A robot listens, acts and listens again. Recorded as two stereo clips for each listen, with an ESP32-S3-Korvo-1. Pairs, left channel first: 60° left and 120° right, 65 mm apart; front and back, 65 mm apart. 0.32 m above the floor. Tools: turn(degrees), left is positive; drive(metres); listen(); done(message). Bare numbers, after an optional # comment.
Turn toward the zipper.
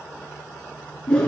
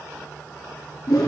listen()
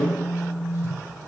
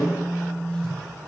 listen()
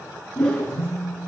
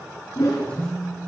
done("I can't make out a zipper, only a phone buzzing and a whoosh.")